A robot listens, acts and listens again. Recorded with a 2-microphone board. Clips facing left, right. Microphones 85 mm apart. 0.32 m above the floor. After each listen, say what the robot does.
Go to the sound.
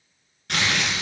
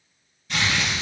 Turn 70° left.
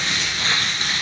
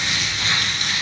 Turn 35° left.
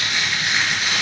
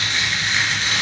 Turn 10° left.
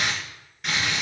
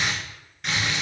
Drive 1.0 m forward.
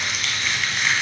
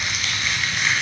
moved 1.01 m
Drive 1.0 m forward.
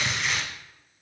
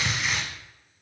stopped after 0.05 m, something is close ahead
I am next to the crumpling.